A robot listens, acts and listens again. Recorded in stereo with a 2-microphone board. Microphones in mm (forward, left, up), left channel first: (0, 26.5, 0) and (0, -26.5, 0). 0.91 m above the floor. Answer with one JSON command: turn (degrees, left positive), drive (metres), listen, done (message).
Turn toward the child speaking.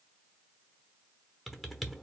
{"listen": true}
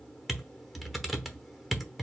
{"listen": true}
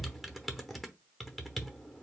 {"done": "I can't make out a child speaking, only typing on a keyboard."}